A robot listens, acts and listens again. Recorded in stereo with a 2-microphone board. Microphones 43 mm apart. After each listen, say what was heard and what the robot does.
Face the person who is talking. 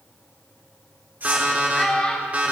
The child speaking: about 25° left or 155° left. Turn 25° left.
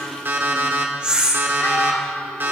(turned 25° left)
Keep listening.
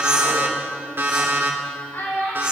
So it is at 110° left. Turn 110° left.
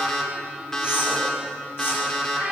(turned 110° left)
The child speaking is now 25° right. Turn 25° right.
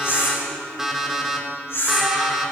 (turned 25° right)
Keep listening.
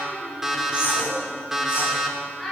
Found it: a child speaking, straight ahead.